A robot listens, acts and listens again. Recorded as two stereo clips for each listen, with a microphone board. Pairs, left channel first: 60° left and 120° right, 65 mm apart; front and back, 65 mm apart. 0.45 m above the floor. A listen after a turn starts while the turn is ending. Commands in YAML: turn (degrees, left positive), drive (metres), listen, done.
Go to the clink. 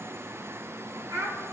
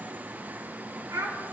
listen: true
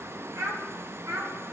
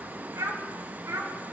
listen: true
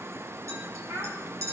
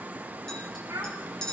turn: -85
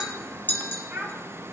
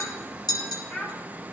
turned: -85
drive: 1.0
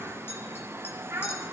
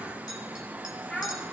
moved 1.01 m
listen: true
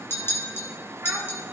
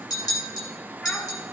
turn: 10
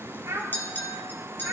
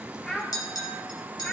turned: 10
drive: 1.0
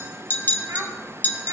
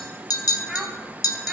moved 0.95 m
drive: 1.0
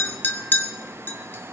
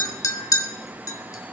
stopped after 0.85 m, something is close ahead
done: "Arrived at the clink, straight ahead."